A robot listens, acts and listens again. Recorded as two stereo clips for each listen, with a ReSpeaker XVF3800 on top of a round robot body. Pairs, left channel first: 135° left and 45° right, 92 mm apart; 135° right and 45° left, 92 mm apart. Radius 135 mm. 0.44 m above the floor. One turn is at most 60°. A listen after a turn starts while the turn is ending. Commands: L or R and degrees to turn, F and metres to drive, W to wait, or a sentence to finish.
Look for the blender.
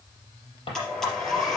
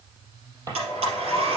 L50
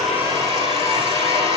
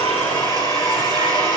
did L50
Found it: a blender, straight ahead, over 4 m away.